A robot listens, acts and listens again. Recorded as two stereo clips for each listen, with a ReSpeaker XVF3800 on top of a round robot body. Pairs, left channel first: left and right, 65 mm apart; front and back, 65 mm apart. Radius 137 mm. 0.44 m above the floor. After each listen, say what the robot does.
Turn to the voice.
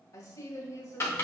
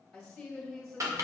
Turn 85° left.
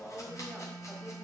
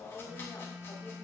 Found it: a woman speaking, straight ahead, 1 to 2 m away.